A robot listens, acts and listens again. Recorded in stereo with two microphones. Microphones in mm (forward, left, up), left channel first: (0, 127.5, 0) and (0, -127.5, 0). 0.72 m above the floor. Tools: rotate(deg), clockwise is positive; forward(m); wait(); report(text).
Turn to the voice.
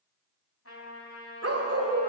wait()
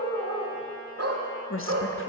rotate(-55)
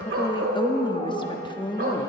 rotate(-20)
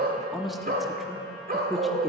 report("Facing the woman speaking, under 1 m away.")